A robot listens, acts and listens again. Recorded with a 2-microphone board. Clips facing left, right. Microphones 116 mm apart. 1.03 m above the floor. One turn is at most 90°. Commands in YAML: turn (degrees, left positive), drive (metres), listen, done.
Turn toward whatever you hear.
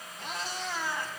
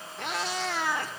turn: -65
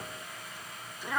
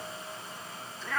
turn: 15
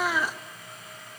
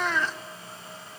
turn: 10
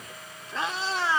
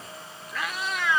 turn: 35
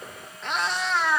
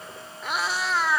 done: "Facing the cat meowing."